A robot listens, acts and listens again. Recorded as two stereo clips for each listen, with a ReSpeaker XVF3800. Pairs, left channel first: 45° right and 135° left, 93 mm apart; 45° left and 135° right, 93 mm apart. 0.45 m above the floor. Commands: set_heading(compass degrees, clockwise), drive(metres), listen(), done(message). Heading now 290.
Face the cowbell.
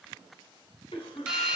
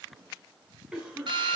listen()
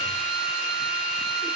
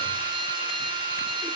listen()
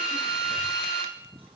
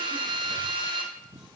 done("I can't make out a cowbell to turn to.")